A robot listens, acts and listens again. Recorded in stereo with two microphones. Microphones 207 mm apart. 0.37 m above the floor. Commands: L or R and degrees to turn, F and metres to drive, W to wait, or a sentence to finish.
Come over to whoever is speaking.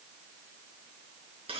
W
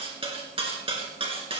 W
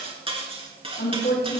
L50
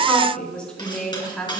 F1.0
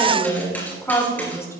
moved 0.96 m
L15
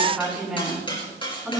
F1.0
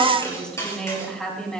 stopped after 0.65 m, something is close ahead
Blocked. The woman speaking is further on, straight ahead.